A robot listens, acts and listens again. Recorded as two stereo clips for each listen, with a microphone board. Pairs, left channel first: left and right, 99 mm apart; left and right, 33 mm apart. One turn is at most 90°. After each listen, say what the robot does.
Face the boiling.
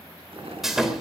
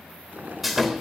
Turn 70° right.
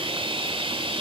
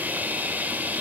Keep listening.
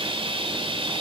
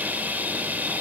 Keep listening.
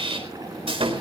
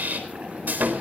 Turn 40° right.
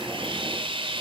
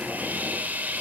Keep listening.
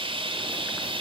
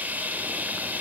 Keep listening.
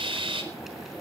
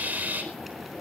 Found it: boiling, straight ahead.